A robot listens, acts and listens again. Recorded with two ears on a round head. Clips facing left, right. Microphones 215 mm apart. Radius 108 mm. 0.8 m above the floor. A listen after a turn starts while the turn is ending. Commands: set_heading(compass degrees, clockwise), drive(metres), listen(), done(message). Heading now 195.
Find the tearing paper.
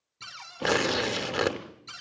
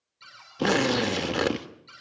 set_heading(165)
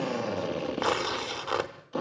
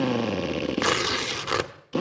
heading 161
set_heading(191)
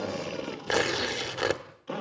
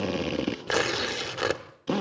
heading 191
done("Facing the tearing paper.")